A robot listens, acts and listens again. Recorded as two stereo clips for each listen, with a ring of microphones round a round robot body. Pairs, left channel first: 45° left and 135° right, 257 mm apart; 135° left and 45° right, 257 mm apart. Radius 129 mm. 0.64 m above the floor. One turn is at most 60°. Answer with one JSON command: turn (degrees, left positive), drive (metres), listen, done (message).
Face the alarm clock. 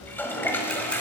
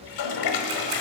{"listen": true}
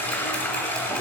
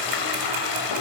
{"listen": true}
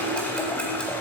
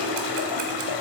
{"done": "I can't make out an alarm clock, only a toilet flushing."}